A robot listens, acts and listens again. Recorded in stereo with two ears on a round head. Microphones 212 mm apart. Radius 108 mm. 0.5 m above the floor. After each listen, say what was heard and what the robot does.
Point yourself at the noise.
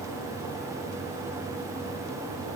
Keep listening.
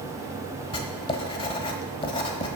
The writing: about 20° left or 160° left. Turn 20° left.
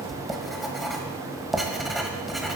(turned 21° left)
Found it: writing, straight ahead, 1 to 2 m away.